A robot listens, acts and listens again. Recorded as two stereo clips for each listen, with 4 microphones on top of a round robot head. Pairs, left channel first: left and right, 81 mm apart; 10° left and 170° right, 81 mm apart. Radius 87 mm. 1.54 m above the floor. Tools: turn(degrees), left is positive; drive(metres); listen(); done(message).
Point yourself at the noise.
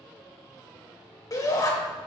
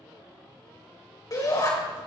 turn(degrees=50)
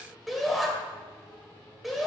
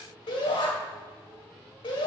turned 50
done("Facing the shout.")